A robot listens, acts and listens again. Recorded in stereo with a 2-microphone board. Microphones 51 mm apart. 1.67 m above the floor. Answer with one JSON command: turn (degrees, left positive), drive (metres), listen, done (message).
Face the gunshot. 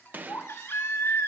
{"turn": -35}
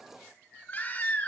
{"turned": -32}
{"listen": true}
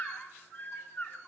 {"done": "I heard a gunshot, but can't make it out now. It was about 5° right or 110° right."}